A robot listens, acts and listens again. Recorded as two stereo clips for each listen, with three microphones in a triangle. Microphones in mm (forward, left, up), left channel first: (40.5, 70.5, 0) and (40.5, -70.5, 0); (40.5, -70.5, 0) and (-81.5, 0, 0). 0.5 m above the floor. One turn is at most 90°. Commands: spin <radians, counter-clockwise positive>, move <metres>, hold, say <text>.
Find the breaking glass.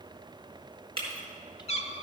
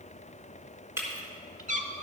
spin -1.57
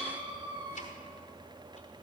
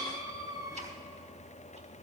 spin -0.87
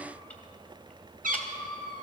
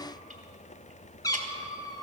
say Facing where the breaking glass came from. I can't hear it now.